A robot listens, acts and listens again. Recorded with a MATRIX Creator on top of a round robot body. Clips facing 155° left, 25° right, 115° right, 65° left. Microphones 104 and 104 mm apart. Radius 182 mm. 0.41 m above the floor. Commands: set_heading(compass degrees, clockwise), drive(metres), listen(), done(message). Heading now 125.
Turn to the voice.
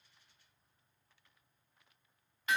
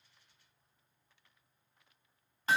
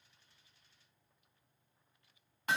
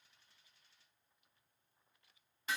listen()
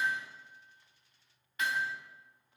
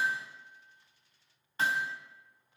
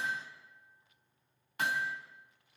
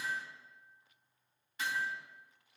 listen()
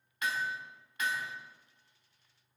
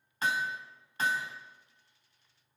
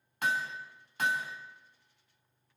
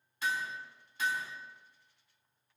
done("I can't make out anyone speaking to turn to.")